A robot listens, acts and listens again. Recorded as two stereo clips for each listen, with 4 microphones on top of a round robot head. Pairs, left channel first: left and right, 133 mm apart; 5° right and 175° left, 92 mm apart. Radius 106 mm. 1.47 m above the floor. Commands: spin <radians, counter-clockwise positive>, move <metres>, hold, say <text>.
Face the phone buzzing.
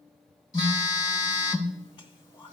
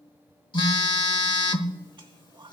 spin 0.61
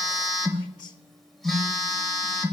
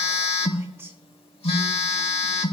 say Found it: a phone buzzing, straight ahead, 1 to 2 m away.